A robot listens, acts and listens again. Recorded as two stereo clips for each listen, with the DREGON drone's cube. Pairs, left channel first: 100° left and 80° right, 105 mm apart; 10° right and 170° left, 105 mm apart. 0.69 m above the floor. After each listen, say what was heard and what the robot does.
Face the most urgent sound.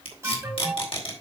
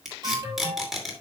The alarm: 140° right. Turn 140° right.
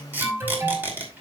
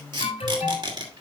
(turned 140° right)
The alarm is now 10° right. Turn 10° right.
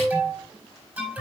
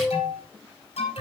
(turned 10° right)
Facing the alarm.